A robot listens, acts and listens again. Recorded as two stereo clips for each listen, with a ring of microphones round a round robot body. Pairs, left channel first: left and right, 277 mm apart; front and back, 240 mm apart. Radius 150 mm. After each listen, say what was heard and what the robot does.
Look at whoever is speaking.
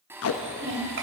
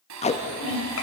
The child speaking: 40° right. Turn 40° right.
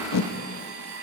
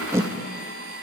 Keep listening.
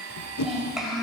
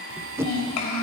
Found it: a child speaking, straight ahead, 2 to 4 m away.